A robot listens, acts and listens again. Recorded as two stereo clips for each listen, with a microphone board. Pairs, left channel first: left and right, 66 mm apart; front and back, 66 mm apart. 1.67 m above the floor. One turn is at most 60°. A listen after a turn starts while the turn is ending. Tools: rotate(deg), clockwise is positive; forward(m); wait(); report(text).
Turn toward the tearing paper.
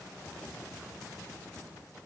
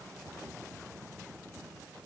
wait()
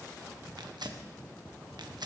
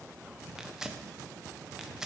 rotate(60)
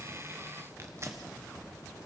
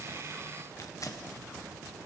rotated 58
rotate(40)
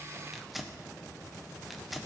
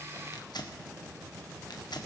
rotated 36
report("Facing the tearing paper, 1 to 2 m away.")